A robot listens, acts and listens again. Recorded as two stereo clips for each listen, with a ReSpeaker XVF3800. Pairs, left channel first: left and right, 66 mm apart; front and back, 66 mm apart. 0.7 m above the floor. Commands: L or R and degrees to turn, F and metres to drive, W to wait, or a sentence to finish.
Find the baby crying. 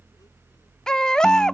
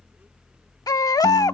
L10
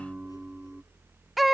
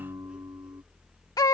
Found it: a baby crying, straight ahead.